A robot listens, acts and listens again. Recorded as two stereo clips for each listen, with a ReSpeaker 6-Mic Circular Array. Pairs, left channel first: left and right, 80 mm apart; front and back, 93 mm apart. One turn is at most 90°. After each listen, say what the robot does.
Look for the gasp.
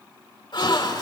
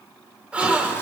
Turn 90° left.
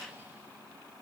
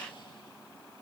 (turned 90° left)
Turn 15° left.
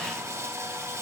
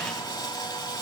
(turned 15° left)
I heard a gasp from this way, but can't make it out now.